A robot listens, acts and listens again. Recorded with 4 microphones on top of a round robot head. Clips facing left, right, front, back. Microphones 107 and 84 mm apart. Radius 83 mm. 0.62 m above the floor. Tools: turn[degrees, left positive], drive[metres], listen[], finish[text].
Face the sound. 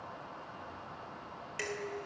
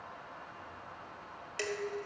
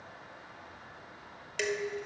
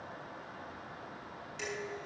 Thought: The dishes clattering: 20° right.
Action: turn[-20]
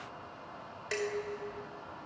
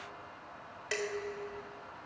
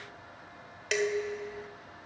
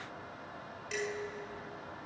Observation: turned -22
Action: finish[Facing the dishes clattering, 1 to 2 m away.]